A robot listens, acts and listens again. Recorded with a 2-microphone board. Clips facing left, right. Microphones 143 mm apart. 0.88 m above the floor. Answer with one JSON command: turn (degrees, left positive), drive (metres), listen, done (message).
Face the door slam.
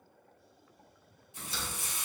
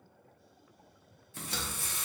{"turn": -70}
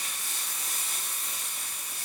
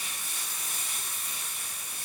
{"listen": true}
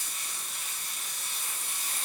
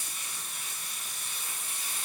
{"done": "I heard a door slam, but can't make it out now. It was about straight ahead or 40° right."}